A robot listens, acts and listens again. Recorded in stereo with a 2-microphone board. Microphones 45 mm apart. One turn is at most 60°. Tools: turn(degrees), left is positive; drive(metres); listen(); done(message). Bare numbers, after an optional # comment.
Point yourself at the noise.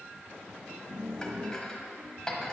# The dishes clattering: about 15° left or 165° left.
turn(15)
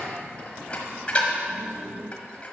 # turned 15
# So it is at 150° left.
turn(60)
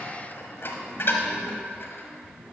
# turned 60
# The dishes clattering is now 85° left.
turn(60)
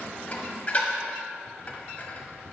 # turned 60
# The dishes clattering is now 40° left.
turn(40)
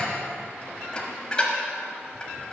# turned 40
# The dishes clattering is now 25° left.
turn(25)
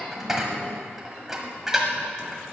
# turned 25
# The dishes clattering is now 10° right.
turn(-10)
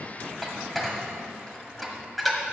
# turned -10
done("Facing the dishes clattering.")